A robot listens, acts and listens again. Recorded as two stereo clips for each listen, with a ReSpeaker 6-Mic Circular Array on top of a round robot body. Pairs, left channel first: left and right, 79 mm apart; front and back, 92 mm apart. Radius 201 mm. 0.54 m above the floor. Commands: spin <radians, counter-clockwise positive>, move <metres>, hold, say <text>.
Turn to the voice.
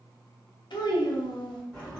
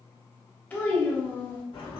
spin 1.31
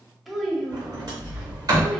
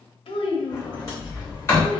say Found it: a child speaking, straight ahead, 1 to 2 m away.